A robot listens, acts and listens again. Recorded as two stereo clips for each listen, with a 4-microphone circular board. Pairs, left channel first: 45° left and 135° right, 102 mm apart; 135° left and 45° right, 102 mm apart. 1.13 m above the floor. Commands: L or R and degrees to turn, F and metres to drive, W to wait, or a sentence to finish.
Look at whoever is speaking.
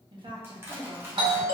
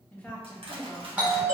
R155
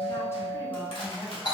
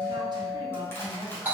R15
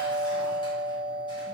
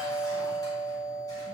W
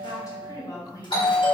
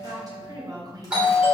Found it: a woman speaking, straight ahead, 1 to 2 m away.